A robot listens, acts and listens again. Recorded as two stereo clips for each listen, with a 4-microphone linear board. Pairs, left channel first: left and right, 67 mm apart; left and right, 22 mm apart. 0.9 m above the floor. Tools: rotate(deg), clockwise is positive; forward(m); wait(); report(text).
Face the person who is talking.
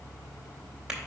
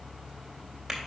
wait()
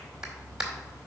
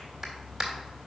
wait()
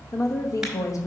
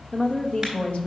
rotate(-55)
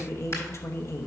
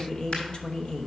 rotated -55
rotate(-50)
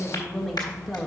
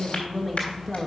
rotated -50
report("Found it: a woman speaking, straight ahead, 1 to 2 m away.")